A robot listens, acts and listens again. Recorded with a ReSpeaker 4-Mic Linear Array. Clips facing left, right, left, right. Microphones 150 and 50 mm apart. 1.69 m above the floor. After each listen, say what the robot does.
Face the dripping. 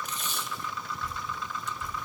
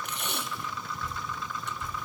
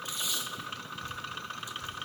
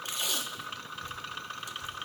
Turn 25° right.
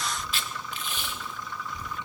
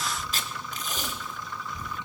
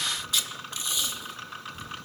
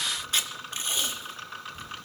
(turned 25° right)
Turn 135° right.
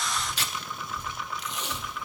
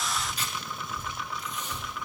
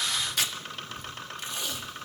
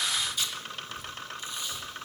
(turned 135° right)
Turn 10° right.
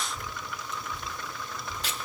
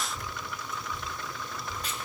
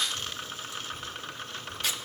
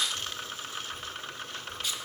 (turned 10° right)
Found it: dripping, straight ahead.